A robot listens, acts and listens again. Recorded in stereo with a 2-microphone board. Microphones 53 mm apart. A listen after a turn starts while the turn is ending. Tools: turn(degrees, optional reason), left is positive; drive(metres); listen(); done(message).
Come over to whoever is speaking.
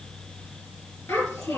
turn(degrees=65, reason="The child speaking: about 65° left or 115° left.")
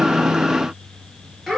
drive(metres=1.0)
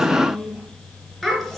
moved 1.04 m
drive(metres=1.0)
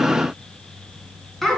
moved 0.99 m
drive(metres=1.0)
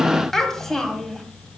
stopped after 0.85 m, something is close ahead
turn(degrees=10, reason="The child speaking is now 10° left.")
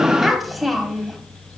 done("Arrived at the child speaking, straight ahead.")